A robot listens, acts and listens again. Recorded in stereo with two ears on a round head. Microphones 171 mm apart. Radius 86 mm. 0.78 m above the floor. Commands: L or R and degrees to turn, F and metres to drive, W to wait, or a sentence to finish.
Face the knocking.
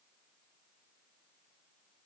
W
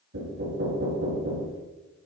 R90
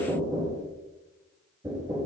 R15
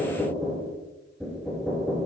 Facing the knocking.